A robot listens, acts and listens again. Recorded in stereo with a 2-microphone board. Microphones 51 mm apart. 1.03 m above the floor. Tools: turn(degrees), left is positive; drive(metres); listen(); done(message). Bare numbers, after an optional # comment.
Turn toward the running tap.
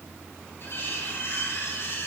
listen()
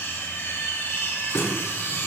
# The running tap: about 75° left or 105° left.
turn(75)
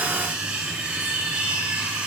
listen()
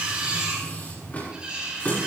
# So it is at 30° left.
turn(30)
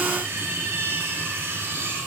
listen()
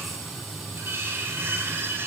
done("Facing the running tap, over 4 m away.")